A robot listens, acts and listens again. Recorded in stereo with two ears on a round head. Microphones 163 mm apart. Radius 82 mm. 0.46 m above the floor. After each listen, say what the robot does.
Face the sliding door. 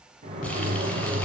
Turn 45° right.
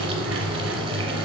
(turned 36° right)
Turn 100° right.
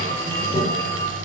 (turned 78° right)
Turn 25° right.
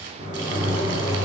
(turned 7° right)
Turn 15° right.
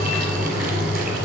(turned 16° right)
Facing the sliding door.